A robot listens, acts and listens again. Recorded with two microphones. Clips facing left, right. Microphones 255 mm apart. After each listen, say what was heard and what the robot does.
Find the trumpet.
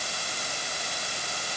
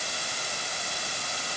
Keep listening.
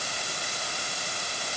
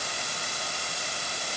Keep listening.
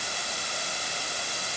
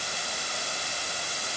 I can't make out a trumpet.